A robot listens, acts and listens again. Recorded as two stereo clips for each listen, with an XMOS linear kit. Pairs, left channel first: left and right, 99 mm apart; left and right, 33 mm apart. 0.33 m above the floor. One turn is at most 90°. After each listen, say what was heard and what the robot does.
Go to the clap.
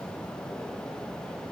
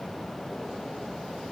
Keep listening.
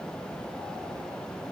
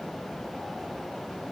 Keep listening.
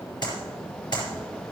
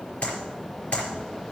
The clap: about 50° left or 130° left. Turn 50° left.
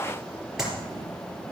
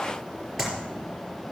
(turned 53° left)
Drive 1.0 m forward.
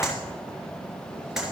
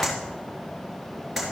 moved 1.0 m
Drive 1.0 m forward.
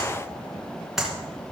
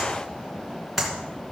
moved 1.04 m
Drive 1.0 m forward.
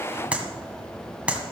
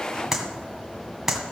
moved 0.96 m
The clap is now 15° right. Turn 15° right.
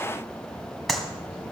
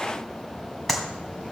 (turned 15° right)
Drive 1.0 m forward.
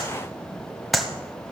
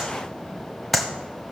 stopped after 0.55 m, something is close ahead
I am next to the clap.